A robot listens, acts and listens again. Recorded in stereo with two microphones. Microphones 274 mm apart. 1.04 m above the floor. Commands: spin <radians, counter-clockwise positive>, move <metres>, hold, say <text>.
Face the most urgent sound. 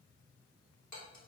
hold
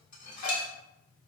hold
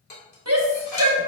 spin -1.05
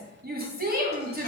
spin -0.70
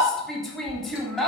say Facing the shout, 1 to 2 m away.